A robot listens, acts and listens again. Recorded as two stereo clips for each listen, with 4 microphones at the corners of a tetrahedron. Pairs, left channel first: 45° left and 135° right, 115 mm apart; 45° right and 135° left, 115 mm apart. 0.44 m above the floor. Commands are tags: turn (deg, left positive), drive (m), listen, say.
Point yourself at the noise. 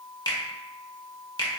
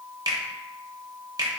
<turn deg="90"/>
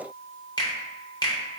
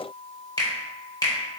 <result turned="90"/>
<say>Found it: a finger snap, straight ahead, under 1 m away.</say>